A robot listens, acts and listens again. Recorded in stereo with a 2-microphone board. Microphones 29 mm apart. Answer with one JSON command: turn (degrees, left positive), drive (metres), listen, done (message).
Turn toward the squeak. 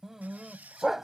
{"turn": -90}
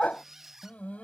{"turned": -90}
{"turn": -15}
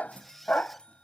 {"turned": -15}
{"done": "Facing the squeak."}